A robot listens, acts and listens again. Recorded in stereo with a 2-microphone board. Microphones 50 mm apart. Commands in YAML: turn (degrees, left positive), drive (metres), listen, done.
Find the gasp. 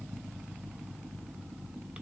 listen: true
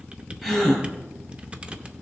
turn: -30
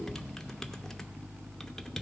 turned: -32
listen: true
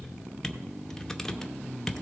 done: "I heard a gasp, but can't make it out now. It was about 25° left or 140° right."